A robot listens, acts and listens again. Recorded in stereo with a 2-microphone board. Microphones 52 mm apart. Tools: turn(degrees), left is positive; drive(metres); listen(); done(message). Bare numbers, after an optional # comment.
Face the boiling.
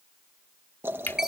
# The boiling: about 50° right or 130° right.
turn(-50)
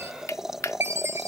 # So it is at 10° right.
turn(-10)
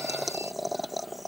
done("Facing the boiling.")